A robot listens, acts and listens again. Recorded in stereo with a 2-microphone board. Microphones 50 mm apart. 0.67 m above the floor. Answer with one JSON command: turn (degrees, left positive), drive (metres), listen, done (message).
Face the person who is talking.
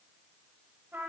{"listen": true}
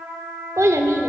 {"turn": -90}
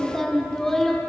{"turn": 10}
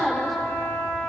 {"done": "Facing the child speaking."}